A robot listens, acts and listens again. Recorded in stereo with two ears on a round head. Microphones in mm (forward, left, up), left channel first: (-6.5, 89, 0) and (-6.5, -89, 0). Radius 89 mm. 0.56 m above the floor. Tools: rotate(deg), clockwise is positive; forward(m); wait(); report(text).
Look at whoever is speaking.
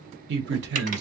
rotate(60)
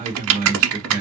rotate(45)
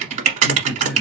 report("Found it: a man speaking, straight ahead.")